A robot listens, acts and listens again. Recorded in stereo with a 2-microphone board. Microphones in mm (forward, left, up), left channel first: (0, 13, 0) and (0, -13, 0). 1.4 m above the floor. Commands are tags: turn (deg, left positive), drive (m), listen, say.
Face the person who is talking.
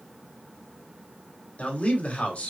<turn deg="65"/>
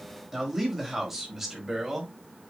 <turn deg="-10"/>
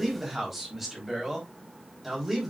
<turn deg="-10"/>
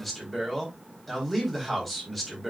<say>Found it: a man speaking, straight ahead.</say>